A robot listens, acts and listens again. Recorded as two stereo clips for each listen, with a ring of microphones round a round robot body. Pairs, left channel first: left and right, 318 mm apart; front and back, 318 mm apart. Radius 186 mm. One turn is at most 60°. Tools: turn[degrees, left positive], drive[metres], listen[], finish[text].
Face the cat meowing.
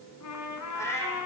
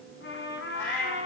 Thought: The cat meowing: 10° left.
Action: turn[10]
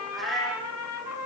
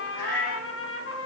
Action: finish[Found it: a cat meowing, straight ahead, over 4 m away.]